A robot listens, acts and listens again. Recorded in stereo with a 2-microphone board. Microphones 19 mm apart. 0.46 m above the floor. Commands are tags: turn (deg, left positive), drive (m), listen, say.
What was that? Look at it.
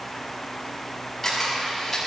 <turn deg="20"/>
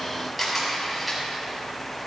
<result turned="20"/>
<say>Facing the camera shutter.</say>